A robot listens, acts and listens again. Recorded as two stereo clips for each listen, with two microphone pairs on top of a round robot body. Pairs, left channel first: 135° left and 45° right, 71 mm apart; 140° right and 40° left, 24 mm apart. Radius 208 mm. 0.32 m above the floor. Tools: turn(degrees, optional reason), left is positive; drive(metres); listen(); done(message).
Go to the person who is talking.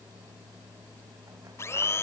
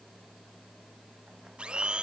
listen()
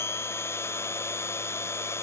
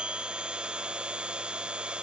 listen()
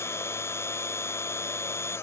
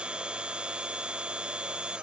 done("I can't make out anyone speaking to turn to.")